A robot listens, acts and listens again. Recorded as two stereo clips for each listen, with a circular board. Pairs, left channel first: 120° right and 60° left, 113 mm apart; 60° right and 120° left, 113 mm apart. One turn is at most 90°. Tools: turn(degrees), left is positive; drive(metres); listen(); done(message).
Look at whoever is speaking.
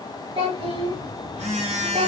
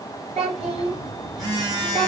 turn(degrees=90)
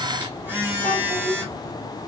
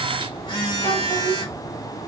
turn(degrees=10)
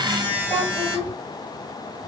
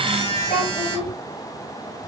turn(degrees=15)
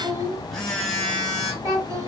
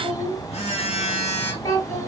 done("Facing the child speaking.")